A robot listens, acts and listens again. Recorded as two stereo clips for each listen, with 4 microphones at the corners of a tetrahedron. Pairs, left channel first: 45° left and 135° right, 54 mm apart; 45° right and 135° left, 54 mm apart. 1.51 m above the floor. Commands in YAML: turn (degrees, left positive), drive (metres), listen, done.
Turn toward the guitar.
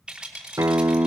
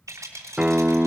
turn: -150
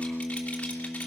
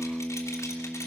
turn: 40
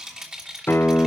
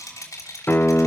done: "Found it: a guitar, straight ahead."